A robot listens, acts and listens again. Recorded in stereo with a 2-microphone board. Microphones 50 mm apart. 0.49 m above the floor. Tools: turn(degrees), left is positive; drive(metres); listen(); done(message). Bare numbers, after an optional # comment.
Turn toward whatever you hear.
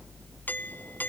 # The doorbell: about 40° left or 140° left.
turn(40)
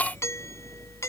# So it is at 95° left.
turn(95)
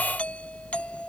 # The doorbell is now 25° left.
turn(25)
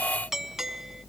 # The doorbell is now 10° right.
turn(-10)
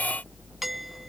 done("Found it: a doorbell, straight ahead.")